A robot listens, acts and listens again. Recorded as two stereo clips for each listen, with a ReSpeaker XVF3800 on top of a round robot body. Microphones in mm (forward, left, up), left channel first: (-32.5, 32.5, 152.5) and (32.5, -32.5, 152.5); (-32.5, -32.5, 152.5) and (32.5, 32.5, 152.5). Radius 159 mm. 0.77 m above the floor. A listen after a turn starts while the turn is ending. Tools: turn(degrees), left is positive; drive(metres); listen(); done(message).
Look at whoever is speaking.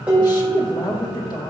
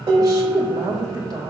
turn(degrees=90)
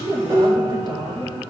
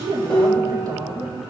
done("Found it: a woman speaking, straight ahead, 2 to 4 m away.")